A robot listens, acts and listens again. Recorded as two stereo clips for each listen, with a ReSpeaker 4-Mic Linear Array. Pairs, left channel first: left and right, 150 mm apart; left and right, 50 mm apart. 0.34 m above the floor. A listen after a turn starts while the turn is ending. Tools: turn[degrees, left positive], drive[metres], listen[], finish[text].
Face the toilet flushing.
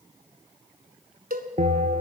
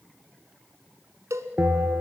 Action: listen[]
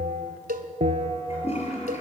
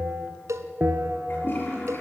Thought: The toilet flushing: about 45° left or 135° left.
Action: turn[45]
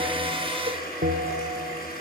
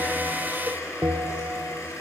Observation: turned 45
Thought: So it is at 90° left.
Action: turn[90]
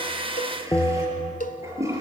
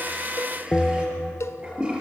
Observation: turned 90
Thought: The toilet flushing is now 20° right.
Action: turn[-20]
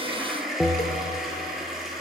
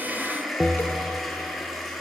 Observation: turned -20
Action: finish[Found it: a toilet flushing, straight ahead, over 4 m away.]